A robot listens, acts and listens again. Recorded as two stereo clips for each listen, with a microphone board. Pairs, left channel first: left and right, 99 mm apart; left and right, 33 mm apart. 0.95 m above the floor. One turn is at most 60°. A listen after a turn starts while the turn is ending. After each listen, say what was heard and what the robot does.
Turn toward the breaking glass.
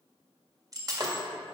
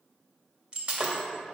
The breaking glass: about 40° right or 140° right. Turn 40° right.
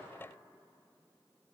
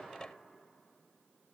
Keep listening.
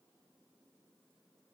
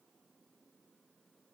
I heard breaking glass, but can't make it out now. It was about straight ahead or 100° right.